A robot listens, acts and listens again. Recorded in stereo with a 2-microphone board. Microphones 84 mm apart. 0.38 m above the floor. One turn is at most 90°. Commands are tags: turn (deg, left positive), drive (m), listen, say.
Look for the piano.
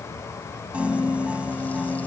<turn deg="-15"/>
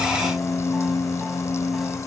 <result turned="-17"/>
<say>Found it: a piano, straight ahead.</say>